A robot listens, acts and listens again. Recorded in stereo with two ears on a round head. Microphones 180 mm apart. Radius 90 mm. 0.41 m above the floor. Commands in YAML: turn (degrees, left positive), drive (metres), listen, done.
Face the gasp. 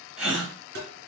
turn: -30
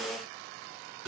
listen: true
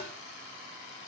done: "I heard a gasp, but can't make it out now. It was about 25° left or 145° right."